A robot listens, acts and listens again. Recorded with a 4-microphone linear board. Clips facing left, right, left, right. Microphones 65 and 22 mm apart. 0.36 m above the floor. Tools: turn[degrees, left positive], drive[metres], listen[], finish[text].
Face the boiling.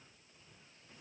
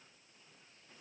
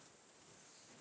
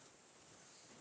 Action: listen[]
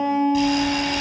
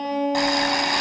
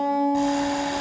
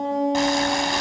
Thought: The boiling: about 65° right or 115° right.
Action: turn[-65]
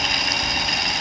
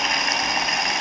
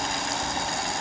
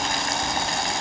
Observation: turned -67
Thought: So it is at 25° right.
Action: turn[-25]
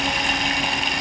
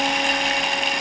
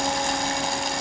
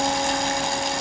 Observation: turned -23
Action: finish[Facing the boiling, 2 to 4 m away.]